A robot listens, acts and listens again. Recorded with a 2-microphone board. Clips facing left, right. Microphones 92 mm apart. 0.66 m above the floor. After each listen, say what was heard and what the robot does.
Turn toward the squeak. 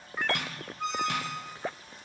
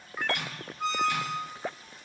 Turn 30° left.
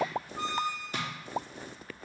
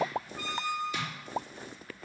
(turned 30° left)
So it is at 155° left. Turn 155° left.
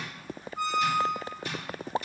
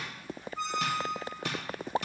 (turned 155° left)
The squeak is now 10° left. Turn 10° left.
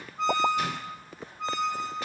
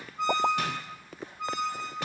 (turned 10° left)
Found it: a squeak, straight ahead.